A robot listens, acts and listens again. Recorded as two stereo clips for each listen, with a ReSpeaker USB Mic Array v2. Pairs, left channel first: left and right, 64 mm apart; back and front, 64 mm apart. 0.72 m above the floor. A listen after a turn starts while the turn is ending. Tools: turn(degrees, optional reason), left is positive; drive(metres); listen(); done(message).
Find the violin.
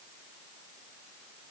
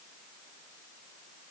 listen()
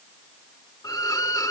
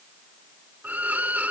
turn(degrees=65, reason="The violin: 65° left.")
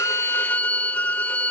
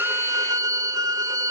turn(degrees=25, reason="The violin is now 25° left.")
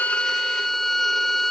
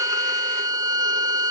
done("Facing the violin.")